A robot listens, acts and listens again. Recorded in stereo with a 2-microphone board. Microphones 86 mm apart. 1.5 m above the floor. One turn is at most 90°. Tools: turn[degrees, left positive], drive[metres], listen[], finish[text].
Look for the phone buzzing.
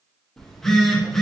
Action: turn[30]
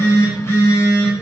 Thought: So it is at 145° left.
Action: turn[90]
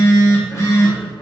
Thought: The phone buzzing is now 35° left.
Action: turn[35]
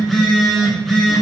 Action: finish[Found it: a phone buzzing, straight ahead, 1 to 2 m away.]